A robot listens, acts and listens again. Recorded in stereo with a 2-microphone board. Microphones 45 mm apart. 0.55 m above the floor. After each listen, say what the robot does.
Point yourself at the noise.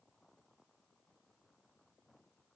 Keep listening.
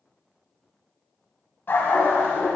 Turn 55° left.
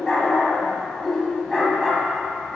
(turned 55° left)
Facing the dog barking, 1 to 2 m away.